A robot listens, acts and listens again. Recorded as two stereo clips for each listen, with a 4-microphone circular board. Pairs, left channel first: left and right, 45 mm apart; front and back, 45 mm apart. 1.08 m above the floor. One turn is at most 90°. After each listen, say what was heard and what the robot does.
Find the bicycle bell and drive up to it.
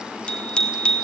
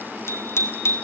The bicycle bell: 20° left. Turn 20° left.
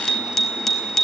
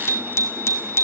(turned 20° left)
The bicycle bell is now 10° left. Turn 10° left.
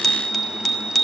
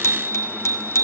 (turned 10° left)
Drive 1.0 m forward.
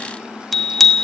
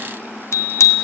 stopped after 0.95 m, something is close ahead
Arrived at the bicycle bell, straight ahead.